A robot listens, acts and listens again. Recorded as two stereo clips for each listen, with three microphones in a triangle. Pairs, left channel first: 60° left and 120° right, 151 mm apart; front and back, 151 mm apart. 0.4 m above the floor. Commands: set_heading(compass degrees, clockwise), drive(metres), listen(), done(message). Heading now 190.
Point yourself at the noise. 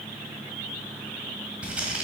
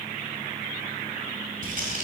set_heading(30)
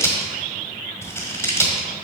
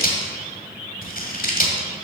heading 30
set_heading(40)
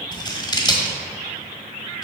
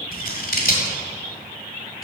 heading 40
done("Found it: scissors, straight ahead, 1 to 2 m away.")